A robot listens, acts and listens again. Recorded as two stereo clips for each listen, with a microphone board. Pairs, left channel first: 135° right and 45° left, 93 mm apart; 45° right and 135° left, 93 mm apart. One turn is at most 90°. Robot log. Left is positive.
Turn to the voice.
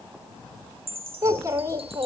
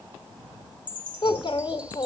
note: The child speaking: 10° right.
cmd yaw -10
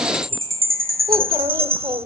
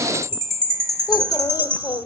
end: Found it: a child speaking, straight ahead, 1 to 2 m away.